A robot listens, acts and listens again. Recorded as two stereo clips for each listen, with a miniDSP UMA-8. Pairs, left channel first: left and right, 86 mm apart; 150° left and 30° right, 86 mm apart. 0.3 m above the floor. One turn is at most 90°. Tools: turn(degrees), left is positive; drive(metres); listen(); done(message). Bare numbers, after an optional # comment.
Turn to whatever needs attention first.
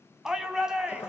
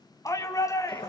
# The shout: 170° right.
turn(-90)
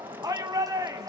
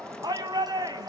# The shout is now 55° right.
turn(-55)
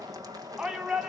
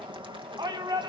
# The shout is now 10° right.
turn(-10)
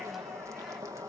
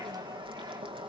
listen()
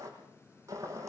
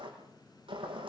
listen()
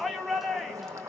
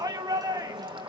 done("Found it: a shout, straight ahead, 2 to 4 m away.")